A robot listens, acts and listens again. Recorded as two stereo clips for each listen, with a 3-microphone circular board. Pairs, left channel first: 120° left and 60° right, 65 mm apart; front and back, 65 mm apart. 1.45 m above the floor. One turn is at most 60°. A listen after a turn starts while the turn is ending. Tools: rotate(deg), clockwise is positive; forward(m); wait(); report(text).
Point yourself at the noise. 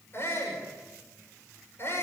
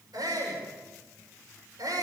rotate(-60)
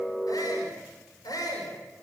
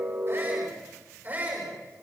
rotate(-60)
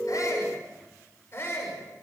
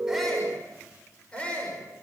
rotate(-60)
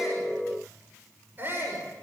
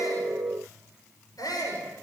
report("Found it: a shout, straight ahead, over 4 m away.")